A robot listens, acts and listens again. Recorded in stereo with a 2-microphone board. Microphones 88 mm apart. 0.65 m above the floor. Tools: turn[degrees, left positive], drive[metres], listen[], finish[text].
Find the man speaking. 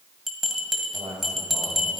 Thought: The man speaking: about 60° right or 120° right.
Action: turn[-60]
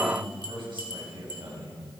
Thought: So it is at 70° right.
Action: turn[-70]
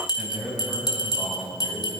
Thought: The man speaking is now 20° right.
Action: turn[-20]
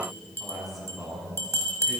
Action: finish[Facing the man speaking, over 4 m away.]